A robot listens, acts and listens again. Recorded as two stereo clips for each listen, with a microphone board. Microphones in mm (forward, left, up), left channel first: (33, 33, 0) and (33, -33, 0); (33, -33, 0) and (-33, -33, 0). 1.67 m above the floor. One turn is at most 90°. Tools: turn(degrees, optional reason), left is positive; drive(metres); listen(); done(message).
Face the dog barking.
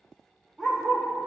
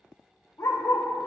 done("Facing the dog barking.")